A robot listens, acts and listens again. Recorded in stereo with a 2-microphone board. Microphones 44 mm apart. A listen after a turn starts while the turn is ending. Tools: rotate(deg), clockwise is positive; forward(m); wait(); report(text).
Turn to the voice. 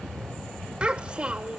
rotate(25)
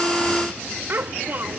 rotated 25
rotate(130)
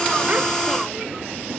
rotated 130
wait()
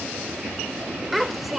report("Found it: a child speaking, straight ahead.")